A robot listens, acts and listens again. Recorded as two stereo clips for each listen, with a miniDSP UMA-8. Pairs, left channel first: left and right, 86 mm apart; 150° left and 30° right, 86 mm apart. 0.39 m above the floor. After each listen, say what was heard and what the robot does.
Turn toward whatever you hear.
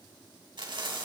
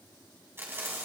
The frying: 90° right. Turn 90° right.
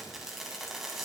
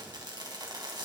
Found it: frying, straight ahead, 2 to 4 m away.